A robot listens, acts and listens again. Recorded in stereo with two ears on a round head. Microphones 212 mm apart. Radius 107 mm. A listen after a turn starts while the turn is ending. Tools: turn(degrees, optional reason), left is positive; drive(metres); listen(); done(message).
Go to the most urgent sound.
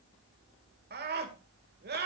turn(degrees=-45, reason="The scream: about 45° right or 135° right.")
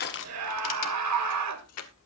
turn(degrees=-90, reason="So it is at 90° right.")
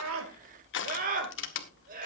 turn(degrees=-35, reason="The scream is now 35° right.")
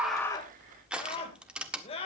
turn(degrees=25, reason="The scream is now 25° left.")
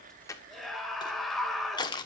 drive(metres=1.0)
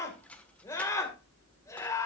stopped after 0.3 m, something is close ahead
turn(degrees=15, reason="The scream is now 15° left.")
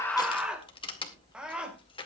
done("Blocked. The scream is further on, straight ahead.")